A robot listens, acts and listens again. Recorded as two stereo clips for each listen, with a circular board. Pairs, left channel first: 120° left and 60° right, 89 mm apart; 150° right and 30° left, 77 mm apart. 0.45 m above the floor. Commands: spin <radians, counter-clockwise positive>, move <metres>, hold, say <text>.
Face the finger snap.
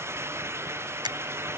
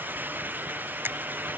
spin -0.52
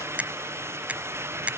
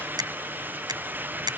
spin 0.26
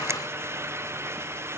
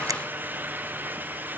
hold
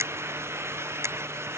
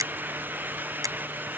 say Facing the finger snap.